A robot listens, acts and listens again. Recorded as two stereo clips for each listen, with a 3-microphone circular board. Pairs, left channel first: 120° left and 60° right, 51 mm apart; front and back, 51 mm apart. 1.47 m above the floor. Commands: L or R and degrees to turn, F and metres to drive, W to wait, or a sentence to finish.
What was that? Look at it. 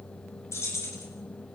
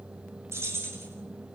L145
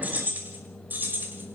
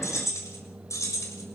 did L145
R10
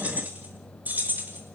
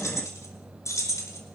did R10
Found it: keys jangling, straight ahead.